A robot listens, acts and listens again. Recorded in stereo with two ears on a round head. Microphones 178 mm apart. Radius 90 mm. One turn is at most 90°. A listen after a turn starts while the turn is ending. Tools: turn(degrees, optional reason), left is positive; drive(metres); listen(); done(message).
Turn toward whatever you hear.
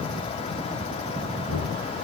turn(degrees=90)
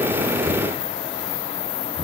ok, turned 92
done("Facing the knocking.")